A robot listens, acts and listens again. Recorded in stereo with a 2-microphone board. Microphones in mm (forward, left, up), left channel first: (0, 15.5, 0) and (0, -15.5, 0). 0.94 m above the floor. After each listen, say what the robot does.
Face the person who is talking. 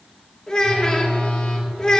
Turn 25° left.
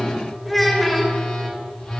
Facing the child speaking.